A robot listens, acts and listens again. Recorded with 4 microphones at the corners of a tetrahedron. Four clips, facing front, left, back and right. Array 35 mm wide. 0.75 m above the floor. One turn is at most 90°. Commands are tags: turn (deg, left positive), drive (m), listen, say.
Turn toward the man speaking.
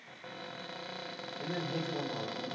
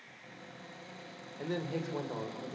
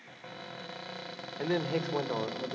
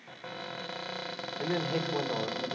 <turn deg="-90"/>
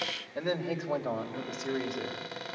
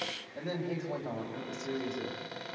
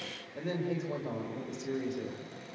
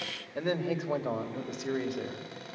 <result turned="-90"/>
<turn deg="-50"/>
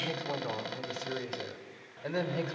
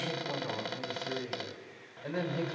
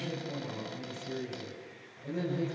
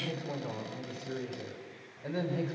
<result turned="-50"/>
<turn deg="-10"/>
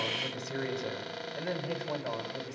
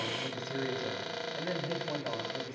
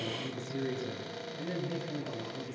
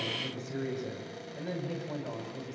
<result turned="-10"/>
<say>Facing the man speaking.</say>